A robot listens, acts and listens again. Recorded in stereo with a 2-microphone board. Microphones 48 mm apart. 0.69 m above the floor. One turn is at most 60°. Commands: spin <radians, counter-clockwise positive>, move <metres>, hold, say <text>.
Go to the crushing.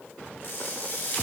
spin 0.87
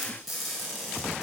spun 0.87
move 1.0
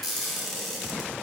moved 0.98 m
move 1.0
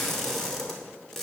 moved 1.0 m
spin 0.17
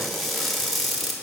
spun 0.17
move 1.0
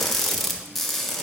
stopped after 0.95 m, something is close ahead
spin 0.17
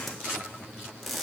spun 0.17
say Arrived at the crushing, straight ahead.